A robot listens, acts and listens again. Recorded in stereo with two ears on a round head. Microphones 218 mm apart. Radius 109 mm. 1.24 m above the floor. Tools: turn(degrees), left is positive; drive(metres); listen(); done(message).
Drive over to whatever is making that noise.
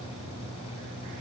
listen()
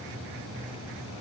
listen()
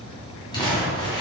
turn(degrees=20)
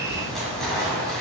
drive(metres=1.0)
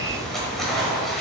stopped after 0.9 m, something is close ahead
done("Arrived at the crumpling, straight ahead.")